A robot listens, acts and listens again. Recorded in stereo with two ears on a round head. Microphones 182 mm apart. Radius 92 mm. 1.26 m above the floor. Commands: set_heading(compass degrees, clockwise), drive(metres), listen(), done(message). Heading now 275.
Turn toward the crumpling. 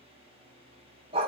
listen()
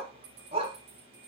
listen()
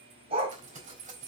set_heading(315)
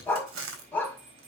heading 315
set_heading(50)
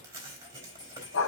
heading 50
set_heading(65)
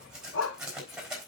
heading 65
done("Found it: crumpling, straight ahead, 2 to 4 m away.")